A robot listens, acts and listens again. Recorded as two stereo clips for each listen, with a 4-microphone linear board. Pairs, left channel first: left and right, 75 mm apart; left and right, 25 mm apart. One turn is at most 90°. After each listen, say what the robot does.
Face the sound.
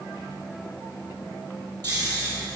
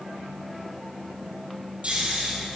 Turn 55° right.
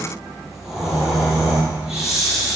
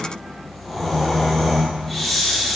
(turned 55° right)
Found it: snoring, straight ahead.